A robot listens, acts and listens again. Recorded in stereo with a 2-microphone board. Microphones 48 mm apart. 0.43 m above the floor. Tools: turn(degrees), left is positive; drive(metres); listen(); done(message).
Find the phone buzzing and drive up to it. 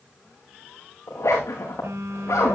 turn(degrees=-90)
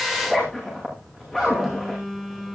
drive(metres=1.0)
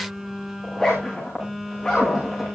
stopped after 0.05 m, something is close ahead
turn(degrees=-10)
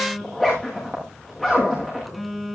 done("Something is in my way. I am facing the phone buzzing but have not reached it.")